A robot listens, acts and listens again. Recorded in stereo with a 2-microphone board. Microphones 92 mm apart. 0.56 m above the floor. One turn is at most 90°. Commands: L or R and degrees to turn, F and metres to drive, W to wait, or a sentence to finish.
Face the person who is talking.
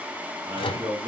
R55
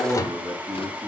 R65
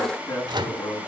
L40
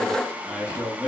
R10
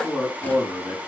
Facing the man speaking, over 4 m away.